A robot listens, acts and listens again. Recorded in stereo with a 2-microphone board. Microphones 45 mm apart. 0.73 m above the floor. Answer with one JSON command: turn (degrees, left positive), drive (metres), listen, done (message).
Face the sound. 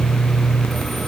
{"listen": true}
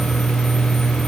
{"listen": true}
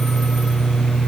{"done": "I can't make out anything."}